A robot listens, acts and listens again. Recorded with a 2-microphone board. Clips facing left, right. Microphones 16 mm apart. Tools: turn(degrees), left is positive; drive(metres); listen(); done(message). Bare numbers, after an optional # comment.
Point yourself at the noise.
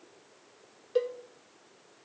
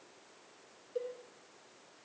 # The cowbell: about 70° left or 110° left.
turn(70)
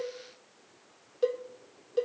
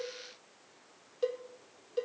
done("Found it: a cowbell, straight ahead, under 1 m away.")